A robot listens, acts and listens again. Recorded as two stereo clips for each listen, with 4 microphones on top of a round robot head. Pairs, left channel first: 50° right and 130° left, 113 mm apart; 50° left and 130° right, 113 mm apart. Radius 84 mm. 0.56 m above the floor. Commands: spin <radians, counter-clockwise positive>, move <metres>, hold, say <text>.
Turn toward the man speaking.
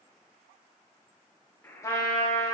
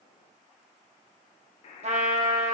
hold
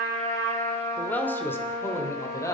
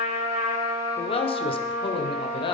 spin 0.17
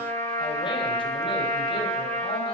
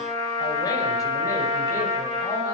hold
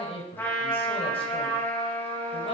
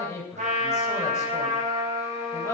spin -0.26
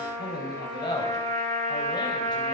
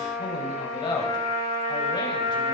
say Facing the man speaking, over 4 m away.